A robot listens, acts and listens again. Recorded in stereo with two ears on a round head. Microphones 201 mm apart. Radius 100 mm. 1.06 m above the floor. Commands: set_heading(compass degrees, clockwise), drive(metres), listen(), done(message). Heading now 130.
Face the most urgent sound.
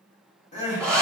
set_heading(100)
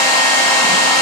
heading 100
listen()
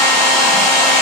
listen()
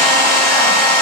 done("I heard crying, but can't make it out now. It was about straight ahead or 120° left.")